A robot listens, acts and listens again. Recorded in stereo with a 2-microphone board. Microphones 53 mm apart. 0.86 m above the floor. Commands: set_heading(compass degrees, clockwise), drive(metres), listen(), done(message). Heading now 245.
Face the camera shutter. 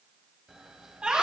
set_heading(275)
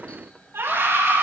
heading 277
set_heading(252)
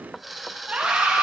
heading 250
done("Facing the camera shutter.")